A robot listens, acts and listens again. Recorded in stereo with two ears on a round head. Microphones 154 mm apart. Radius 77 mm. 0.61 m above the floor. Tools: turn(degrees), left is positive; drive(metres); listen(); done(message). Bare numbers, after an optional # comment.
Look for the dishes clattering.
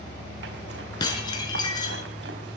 # The dishes clattering: about 25° left or 155° left.
turn(25)
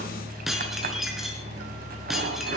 done("Found it: dishes clattering, straight ahead.")